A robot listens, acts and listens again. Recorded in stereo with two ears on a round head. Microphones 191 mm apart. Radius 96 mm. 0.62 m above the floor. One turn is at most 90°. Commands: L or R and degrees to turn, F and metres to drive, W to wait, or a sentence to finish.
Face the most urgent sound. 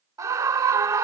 R15
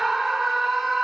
Facing the scream.